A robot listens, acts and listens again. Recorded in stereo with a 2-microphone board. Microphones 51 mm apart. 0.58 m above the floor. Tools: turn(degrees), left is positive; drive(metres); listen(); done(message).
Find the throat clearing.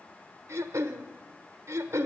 turn(degrees=-75)
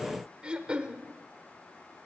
turn(degrees=-25)
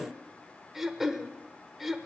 done("Found it: throat clearing, straight ahead, under 1 m away.")